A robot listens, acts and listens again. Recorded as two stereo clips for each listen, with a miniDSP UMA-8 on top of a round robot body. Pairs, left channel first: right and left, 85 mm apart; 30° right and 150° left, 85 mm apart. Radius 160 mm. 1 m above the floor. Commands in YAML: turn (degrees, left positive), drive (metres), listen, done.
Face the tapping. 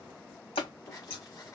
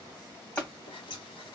turn: -105
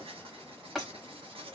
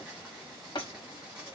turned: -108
done: "Found it: tapping, straight ahead."